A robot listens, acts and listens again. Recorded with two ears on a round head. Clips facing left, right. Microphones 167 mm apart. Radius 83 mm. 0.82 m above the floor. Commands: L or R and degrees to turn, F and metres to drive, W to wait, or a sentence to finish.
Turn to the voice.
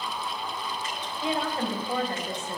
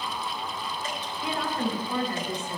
L30
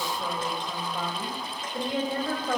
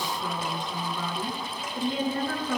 L125
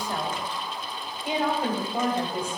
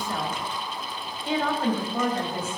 L10
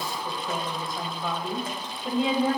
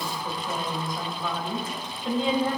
Found it: a woman speaking, straight ahead.